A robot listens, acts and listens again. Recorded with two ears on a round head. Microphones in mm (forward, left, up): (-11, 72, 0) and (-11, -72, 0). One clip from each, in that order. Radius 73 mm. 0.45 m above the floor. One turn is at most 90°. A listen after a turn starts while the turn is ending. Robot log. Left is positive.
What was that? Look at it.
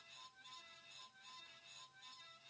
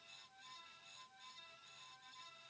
cmd idle
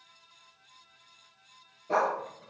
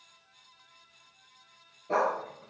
cmd yaw +30
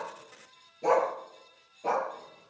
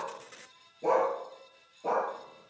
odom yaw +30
note: So it is at 130° left.
cmd yaw +90
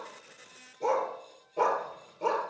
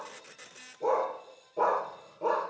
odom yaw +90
note: The dog barking is now 50° left.
cmd yaw +50
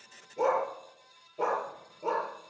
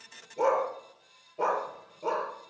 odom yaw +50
end: Facing the dog barking.